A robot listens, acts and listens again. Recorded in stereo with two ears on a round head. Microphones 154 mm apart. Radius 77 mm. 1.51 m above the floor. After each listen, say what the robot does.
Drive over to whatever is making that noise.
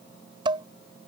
Turn 30° right.
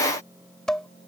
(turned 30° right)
Drive 1.0 m forward.
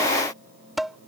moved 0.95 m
Drive 1.0 m forward.
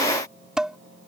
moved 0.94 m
Drive 1.0 m forward.
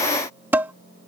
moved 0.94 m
Turn 15° right.
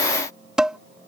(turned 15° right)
Drive 1.0 m forward.
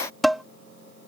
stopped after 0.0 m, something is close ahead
Arrived at the dishes clattering, straight ahead.